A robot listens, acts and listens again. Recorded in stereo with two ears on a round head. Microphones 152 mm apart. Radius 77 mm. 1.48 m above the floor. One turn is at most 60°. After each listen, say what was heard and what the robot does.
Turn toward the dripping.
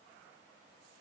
Keep listening.
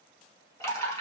The dripping: about 20° left or 160° left. Turn 20° left.
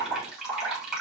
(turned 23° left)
Facing the dripping, over 4 m away.